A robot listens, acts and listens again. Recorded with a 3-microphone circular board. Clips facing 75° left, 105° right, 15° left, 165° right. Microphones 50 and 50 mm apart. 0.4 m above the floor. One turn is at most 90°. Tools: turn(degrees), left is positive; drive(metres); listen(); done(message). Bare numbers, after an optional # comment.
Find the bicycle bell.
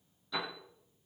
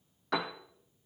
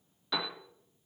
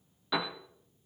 listen()
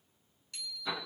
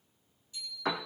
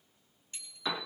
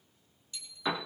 # The bicycle bell: 65° left.
turn(65)
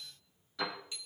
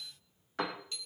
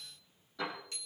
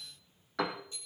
done("Found it: a bicycle bell, straight ahead.")